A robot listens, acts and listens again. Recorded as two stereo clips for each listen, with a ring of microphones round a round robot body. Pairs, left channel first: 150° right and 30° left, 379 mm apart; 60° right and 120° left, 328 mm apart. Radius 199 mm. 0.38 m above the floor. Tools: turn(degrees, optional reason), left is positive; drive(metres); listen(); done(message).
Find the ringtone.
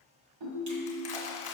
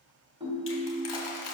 turn(degrees=45, reason="The ringtone: 45° left.")
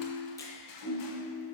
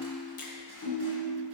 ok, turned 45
turn(degrees=-15, reason="The ringtone is now 15° right.")
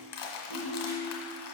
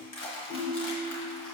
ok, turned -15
done("Found it: a ringtone, straight ahead.")